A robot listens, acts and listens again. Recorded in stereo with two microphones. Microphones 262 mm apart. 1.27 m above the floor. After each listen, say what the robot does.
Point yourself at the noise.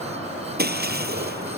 Turn 40° right.
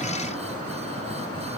Keep listening.
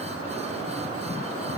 I heard breaking glass, but can't make it out now. It was about straight ahead or 100° right.